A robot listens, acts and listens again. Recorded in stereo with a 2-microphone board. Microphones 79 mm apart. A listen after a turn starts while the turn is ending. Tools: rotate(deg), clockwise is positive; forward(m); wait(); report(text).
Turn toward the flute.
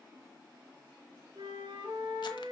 rotate(65)
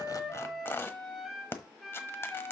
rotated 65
report("Facing the flute, 2 to 4 m away.")